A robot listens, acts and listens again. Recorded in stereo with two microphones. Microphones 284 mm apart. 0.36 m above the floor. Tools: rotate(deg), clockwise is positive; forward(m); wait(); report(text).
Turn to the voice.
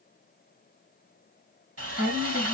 rotate(30)
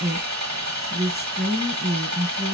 rotate(145)
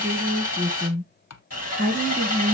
rotate(-10)
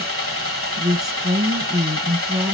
report("Found it: a woman speaking, straight ahead, 2 to 4 m away.")